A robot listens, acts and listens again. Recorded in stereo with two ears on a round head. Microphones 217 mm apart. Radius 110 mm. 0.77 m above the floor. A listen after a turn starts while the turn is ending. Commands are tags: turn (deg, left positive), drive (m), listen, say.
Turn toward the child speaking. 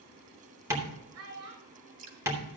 <turn deg="-60"/>
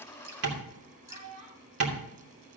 <turn deg="-75"/>
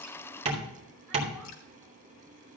<listen/>
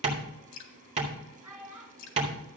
<say>Found it: a child speaking, straight ahead.</say>